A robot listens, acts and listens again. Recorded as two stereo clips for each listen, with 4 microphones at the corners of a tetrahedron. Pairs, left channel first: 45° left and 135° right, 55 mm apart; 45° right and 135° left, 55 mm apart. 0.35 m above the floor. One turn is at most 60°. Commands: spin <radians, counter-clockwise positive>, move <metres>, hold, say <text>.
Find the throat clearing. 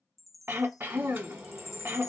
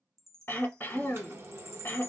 spin -1.05
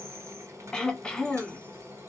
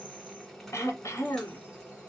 spin -0.52
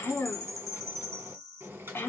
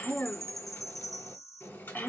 say Facing the throat clearing.